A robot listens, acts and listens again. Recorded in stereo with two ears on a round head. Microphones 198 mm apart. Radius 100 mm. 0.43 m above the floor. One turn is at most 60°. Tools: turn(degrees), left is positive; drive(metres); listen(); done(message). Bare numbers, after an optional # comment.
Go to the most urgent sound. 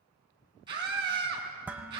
# The scream: about 20° right or 160° right.
turn(-20)
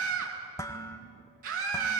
# So it is at 135° right.
turn(-60)
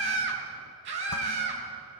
# The scream is now 60° right.
turn(-60)
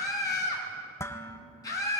# The scream is now 15° left.
turn(15)
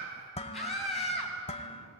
drive(1.0)
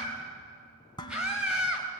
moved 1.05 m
drive(1.0)
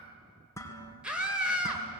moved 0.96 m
drive(1.0)
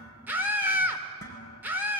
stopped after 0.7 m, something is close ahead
# The scream is now 15° right.
turn(-15)
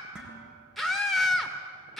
done("Arrived at the scream, straight ahead.")